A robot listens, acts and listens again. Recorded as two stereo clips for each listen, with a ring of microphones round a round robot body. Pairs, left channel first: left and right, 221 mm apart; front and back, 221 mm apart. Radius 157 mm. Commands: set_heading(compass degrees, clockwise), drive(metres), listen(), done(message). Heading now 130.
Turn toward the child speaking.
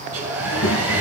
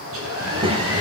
set_heading(15)
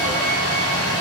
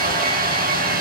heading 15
listen()
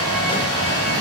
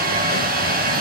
listen()
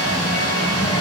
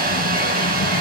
set_heading(355)
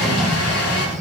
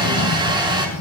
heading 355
done("Facing the child speaking, 1 to 2 m away.")